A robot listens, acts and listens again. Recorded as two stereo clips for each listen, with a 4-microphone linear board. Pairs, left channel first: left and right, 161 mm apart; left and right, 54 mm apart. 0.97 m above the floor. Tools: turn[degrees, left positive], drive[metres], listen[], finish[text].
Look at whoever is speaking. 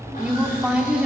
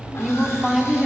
Action: turn[-30]
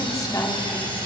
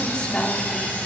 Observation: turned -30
Thought: So it is at 20° left.
Action: turn[20]
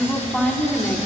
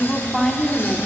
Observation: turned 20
Action: finish[Found it: a woman speaking, straight ahead.]